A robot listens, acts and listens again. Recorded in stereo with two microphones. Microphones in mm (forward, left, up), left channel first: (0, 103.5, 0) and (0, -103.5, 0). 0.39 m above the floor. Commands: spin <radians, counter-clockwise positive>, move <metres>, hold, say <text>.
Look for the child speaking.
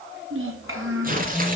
spin -1.57
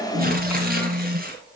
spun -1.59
hold
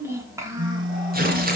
spin -0.26
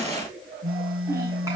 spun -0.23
hold
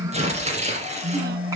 hold
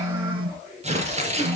say Facing where the child speaking came from. I can't hear it now.